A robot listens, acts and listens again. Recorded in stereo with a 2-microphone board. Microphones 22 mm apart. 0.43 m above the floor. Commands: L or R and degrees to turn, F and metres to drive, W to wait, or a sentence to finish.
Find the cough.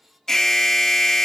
W
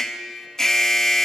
W
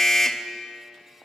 I can't make out a cough to turn to.